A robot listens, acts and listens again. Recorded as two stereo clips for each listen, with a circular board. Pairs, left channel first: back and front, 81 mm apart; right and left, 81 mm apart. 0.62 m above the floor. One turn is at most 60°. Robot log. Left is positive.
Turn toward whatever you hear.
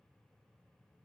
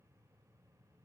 cmd idle
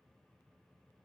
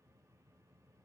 cmd idle
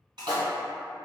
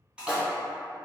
note: The splash: 10° left.
cmd yaw +10
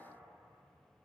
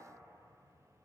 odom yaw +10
end: Facing where the splash came from. I can't hear it now.